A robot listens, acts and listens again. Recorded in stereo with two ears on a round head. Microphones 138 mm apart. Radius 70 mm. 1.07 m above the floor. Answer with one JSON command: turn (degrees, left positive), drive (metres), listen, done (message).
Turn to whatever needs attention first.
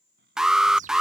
{"turn": -30}
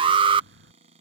{"turn": -145}
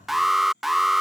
{"done": "Found it: an alarm, straight ahead."}